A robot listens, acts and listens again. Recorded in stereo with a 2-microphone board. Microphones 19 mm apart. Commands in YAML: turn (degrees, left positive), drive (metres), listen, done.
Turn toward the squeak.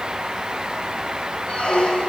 turn: 75
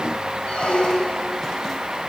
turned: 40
turn: 65
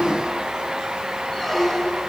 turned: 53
turn: 10
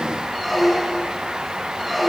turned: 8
done: "Facing the squeak."